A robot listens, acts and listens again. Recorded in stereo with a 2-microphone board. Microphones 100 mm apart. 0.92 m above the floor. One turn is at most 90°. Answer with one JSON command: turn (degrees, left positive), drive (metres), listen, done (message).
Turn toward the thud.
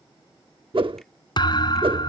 {"turn": 50}
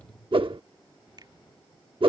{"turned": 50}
{"listen": true}
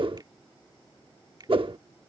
{"done": "I heard a thud, but can't make it out now. It was about straight ahead or 80° left."}